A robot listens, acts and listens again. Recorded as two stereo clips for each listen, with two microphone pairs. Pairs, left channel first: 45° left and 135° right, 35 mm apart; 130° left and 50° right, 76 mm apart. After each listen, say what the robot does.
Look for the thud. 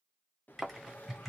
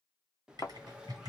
Turn 145° left.
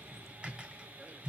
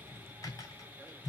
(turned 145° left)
I heard a thud from this way, but can't make it out now.